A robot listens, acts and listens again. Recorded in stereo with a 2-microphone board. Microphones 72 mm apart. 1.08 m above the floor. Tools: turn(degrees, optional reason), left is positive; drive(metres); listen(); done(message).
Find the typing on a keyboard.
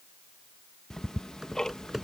turn(degrees=-30)
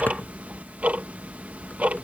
listen()
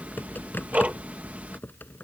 turn(degrees=25, reason="So it is at 25° left.")
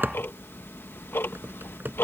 turn(degrees=-25, reason="The typing on a keyboard is now 25° right.")
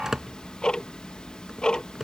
done("Found it: typing on a keyboard, straight ahead.")